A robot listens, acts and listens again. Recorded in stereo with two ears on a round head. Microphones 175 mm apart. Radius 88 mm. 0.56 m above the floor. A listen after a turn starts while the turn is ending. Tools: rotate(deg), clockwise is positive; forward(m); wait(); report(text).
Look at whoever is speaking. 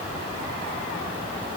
wait()
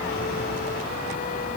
wait()
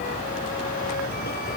report("I can't make out anyone speaking to turn to.")